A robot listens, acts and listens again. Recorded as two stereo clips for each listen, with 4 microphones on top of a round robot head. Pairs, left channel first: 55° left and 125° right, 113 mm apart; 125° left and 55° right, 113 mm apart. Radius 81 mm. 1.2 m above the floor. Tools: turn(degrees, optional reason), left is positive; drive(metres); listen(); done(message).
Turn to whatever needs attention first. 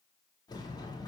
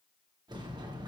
listen()
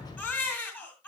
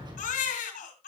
turn(degrees=130, reason="The baby crying: 130° left.")
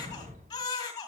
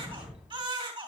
done("Facing the baby crying.")